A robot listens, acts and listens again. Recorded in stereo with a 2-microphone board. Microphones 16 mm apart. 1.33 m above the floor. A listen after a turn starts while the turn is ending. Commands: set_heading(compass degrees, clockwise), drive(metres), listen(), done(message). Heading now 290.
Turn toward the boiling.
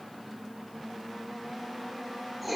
listen()
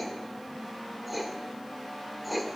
listen()
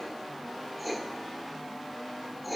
done("I can't make out boiling to turn to.")